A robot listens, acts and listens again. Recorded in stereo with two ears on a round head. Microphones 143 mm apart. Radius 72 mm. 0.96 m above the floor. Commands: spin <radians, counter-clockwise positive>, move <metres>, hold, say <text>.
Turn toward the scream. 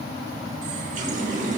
hold
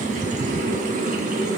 hold
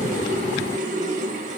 say I can't make out a scream to turn to.